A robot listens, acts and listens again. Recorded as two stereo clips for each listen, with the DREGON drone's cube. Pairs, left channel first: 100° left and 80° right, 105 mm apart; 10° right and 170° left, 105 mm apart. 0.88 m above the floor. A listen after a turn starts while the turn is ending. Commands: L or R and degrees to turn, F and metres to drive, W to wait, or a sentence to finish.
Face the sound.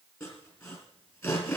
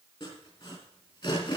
L40
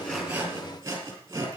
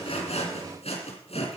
R15
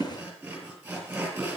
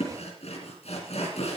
Found it: sawing, straight ahead.